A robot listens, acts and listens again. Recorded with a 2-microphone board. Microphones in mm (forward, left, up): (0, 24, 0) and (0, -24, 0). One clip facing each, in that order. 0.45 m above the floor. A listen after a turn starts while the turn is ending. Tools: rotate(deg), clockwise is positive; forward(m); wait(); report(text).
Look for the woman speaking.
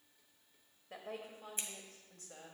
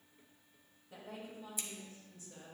rotate(-65)
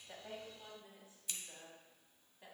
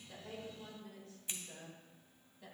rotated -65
rotate(-20)
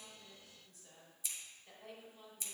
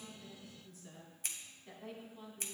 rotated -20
report("Found it: a woman speaking, straight ahead.")